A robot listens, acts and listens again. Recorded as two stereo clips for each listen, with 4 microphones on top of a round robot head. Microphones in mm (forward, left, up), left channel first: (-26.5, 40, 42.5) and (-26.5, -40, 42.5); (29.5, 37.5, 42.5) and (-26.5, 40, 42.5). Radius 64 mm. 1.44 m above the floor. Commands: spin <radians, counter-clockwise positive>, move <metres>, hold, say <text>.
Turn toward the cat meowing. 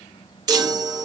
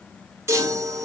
hold
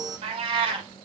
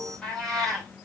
spin -1.57
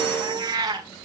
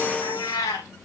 spin -0.70
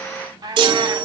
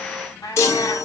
spin -0.61
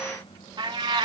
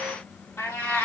spin -1.31
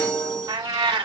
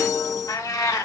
spin -0.87
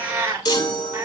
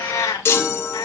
spin -0.35
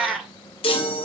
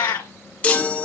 say Found it: a cat meowing, straight ahead.